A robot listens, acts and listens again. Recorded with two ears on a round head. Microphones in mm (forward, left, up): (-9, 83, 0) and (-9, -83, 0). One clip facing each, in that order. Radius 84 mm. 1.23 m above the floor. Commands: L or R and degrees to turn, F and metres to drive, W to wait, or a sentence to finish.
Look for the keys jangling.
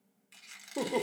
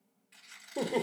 W
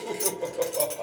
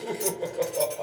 L55
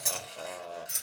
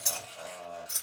L25
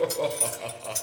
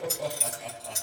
Facing the keys jangling.